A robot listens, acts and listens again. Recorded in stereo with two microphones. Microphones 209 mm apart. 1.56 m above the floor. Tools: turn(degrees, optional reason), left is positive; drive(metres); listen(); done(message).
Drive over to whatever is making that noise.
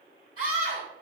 turn(degrees=-90)
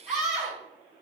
drive(metres=1.0)
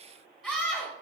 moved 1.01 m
drive(metres=1.0)
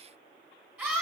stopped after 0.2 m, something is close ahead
turn(degrees=-10, reason="The scream is now 10° right.")
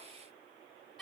done("Arrived at the scream, straight ahead.")